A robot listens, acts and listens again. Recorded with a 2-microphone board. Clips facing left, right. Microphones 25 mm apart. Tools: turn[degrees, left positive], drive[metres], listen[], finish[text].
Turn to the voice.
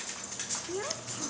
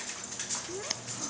Thought: The child speaking: about 25° left or 155° left.
Action: turn[25]
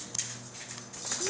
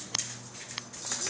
Action: listen[]
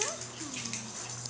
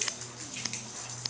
Action: listen[]
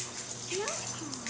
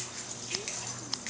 Thought: So it is at 130° left.
Action: turn[130]
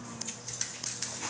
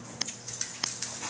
Action: listen[]
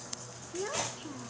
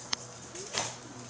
Thought: The child speaking is now 55° left.
Action: turn[55]
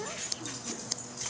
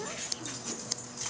Action: finish[Facing the child speaking.]